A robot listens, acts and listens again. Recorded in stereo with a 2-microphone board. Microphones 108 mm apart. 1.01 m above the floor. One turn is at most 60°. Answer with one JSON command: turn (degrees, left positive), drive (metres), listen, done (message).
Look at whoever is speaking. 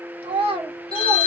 {"turn": -60}
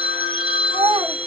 {"turn": -50}
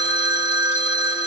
{"listen": true}
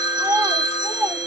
{"turn": -20}
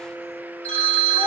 {"listen": true}
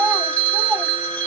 {"done": "Found it: a child speaking, straight ahead, 1 to 2 m away."}